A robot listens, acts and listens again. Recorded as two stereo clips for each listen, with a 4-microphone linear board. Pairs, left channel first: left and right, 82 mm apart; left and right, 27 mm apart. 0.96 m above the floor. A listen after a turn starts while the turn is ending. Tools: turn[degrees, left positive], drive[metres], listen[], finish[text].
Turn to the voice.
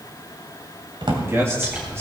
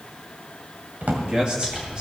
Thought: The man speaking: about 30° right or 150° right.
Action: turn[-30]
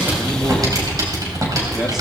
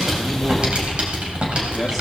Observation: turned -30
Action: listen[]
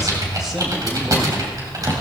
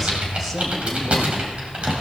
Action: listen[]
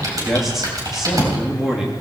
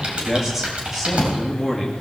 Action: finish[Found it: a man speaking, straight ahead.]